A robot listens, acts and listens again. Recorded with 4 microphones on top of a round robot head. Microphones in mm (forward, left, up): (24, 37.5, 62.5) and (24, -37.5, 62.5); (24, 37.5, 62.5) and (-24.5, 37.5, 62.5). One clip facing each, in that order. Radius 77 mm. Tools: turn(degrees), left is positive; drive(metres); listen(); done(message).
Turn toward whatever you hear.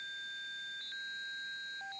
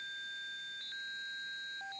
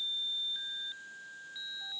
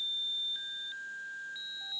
listen()
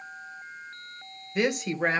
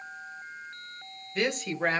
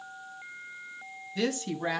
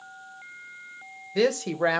turn(degrees=175)
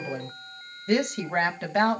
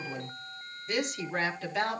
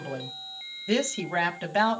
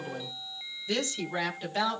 turn(degrees=55)
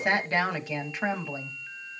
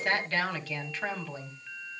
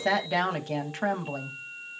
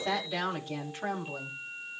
turn(degrees=15)
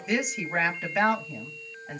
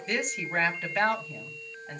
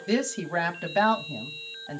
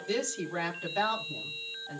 done("Found it: a woman speaking, straight ahead.")